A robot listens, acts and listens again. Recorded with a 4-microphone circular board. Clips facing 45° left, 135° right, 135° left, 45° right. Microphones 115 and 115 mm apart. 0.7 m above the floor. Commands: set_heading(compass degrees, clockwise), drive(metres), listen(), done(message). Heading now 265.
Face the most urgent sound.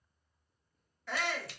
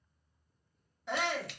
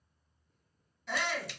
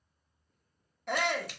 set_heading(330)
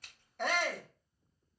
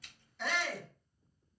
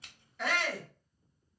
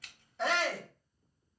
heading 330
set_heading(315)
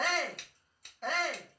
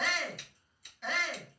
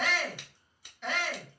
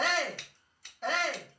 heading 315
done("Found it: a shout, straight ahead, 1 to 2 m away.")